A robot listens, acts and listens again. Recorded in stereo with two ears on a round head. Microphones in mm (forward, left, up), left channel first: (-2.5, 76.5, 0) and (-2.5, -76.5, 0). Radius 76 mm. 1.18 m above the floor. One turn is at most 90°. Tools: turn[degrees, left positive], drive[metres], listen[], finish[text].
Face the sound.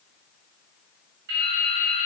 Thought: The dripping: about 70° right or 110° right.
Action: turn[-70]
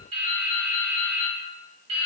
Thought: So it is at 40° right.
Action: turn[-40]
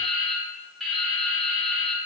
Action: finish[Found it: dripping, straight ahead.]